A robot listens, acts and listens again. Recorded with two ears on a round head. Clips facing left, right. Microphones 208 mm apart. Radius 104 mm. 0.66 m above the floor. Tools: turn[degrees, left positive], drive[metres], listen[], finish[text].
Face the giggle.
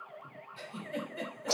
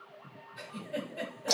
Thought: The giggle: about 15° left or 165° left.
Action: turn[15]
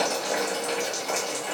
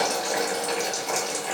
Action: listen[]
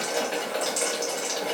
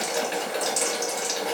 Action: listen[]
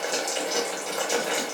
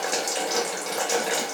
Action: finish[I heard a giggle, but can't make it out now. It was about straight ahead or 150° left.]